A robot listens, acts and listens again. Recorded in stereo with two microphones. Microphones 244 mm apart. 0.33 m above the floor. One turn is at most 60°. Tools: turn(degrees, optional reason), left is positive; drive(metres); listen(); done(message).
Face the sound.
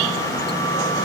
listen()
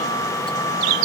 listen()
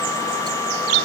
done("I can't make out anything to turn to.")